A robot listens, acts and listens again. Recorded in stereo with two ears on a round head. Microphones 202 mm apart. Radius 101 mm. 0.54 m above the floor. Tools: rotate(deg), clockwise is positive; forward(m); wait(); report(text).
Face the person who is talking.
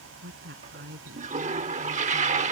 rotate(45)
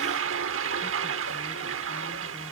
wait()
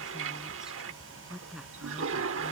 report("Found it: a woman speaking, straight ahead.")